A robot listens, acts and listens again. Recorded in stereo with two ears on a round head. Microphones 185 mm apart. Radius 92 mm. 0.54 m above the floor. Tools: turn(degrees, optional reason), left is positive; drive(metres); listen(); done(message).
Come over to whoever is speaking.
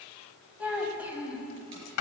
turn(degrees=-30)
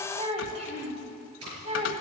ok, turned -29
turn(degrees=-145, reason="So it is at 145° right.")
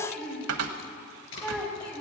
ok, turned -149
drive(metres=1.0)
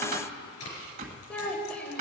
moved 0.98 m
drive(metres=1.0)
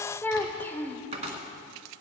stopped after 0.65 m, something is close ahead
turn(degrees=10, reason="The child speaking is now 10° left.")
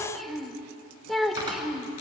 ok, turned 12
done("I am next to the child speaking.")